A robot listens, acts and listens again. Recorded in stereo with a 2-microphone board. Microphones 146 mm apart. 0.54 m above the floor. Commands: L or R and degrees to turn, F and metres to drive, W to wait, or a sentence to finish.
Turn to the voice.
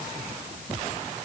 W
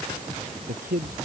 R70
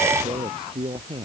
R35
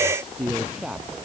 Found it: a man speaking, straight ahead.